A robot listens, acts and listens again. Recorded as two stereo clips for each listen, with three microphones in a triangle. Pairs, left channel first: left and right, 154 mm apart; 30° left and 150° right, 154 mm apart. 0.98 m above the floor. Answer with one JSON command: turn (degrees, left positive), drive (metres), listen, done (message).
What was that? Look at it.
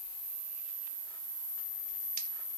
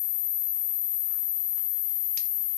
{"listen": true}
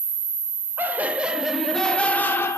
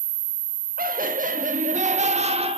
{"turn": 160}
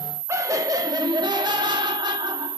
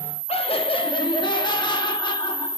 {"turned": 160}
{"turn": -30}
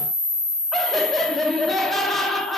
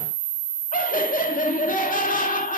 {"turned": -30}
{"done": "Found it: laughter, straight ahead, 1 to 2 m away."}